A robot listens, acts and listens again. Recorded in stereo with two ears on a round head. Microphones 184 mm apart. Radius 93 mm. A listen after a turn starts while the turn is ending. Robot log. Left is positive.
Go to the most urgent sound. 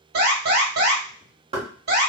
note: The alarm: about 50° right or 130° right.
cmd yaw -50
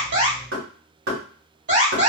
note: So it is at 70° right.
cmd yaw -70
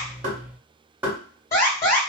note: The alarm is now 20° left.
cmd yaw +20
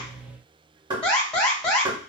cmd fwd 1.0
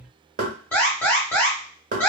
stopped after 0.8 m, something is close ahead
note: The alarm is now 15° left.
cmd yaw +15
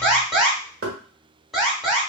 end: I am next to the alarm.